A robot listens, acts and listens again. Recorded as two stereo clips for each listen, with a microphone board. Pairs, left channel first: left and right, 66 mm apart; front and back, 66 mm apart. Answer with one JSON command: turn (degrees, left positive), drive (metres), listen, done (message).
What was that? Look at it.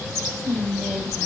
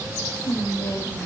{"turn": -10}
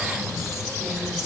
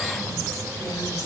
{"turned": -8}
{"listen": true}
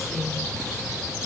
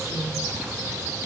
{"done": "Found it: whispering, straight ahead."}